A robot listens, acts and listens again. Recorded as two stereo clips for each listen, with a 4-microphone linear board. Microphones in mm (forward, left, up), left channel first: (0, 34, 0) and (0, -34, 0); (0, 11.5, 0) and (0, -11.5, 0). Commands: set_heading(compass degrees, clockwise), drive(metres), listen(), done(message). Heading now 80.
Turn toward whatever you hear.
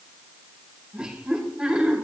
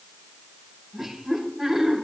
set_heading(110)
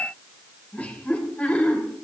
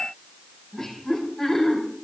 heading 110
set_heading(90)
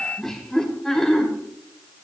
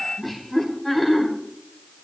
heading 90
set_heading(80)
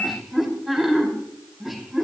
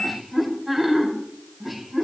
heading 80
done("Facing the laughter, over 4 m away.")